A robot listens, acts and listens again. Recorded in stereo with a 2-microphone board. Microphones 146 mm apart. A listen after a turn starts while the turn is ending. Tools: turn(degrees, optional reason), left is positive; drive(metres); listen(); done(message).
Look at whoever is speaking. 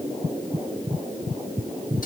listen()
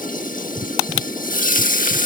listen()
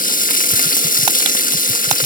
done("I can't make out anyone speaking to turn to.")